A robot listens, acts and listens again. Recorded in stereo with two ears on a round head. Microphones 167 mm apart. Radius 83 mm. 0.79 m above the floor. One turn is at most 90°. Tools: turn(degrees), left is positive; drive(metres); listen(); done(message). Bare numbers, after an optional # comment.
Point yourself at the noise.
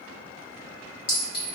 # The clink: about 65° left or 115° left.
turn(65)
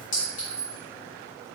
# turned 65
# So it is at 45° left.
turn(45)
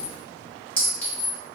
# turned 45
# The clink is now 10° left.
turn(10)
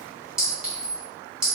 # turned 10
done("Facing the clink.")